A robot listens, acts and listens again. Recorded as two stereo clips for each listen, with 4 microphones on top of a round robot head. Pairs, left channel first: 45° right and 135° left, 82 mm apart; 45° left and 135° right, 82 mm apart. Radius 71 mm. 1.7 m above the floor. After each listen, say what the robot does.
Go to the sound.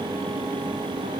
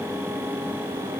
Keep listening.
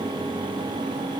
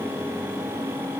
Keep listening.
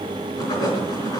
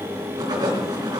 Turn 90° right.
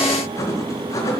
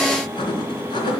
Turn 10° left.
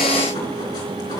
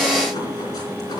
Keep listening.
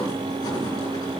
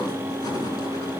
Keep listening.
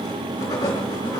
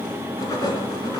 Drive 1.0 m forward.
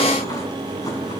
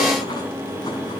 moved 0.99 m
Keep listening.
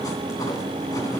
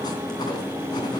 Keep listening.
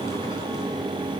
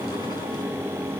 I heard writing from this way, but can't make it out now. I did not reach it.